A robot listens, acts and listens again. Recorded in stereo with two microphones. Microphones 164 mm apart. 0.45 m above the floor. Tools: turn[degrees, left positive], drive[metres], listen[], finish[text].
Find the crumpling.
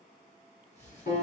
Thought: The crumpling: about 45° left or 135° left.
Action: turn[45]
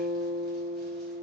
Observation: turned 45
Action: listen[]
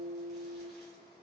Action: listen[]
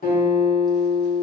Action: finish[I heard crumpling, but can't make it out now. It was about straight ahead or 90° left.]